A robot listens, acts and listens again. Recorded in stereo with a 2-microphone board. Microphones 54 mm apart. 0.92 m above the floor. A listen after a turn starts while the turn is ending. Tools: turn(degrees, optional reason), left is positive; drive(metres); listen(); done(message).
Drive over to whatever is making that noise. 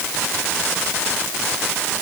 listen()
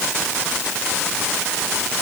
listen()
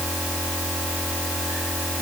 done("I can't make out anything to turn to.")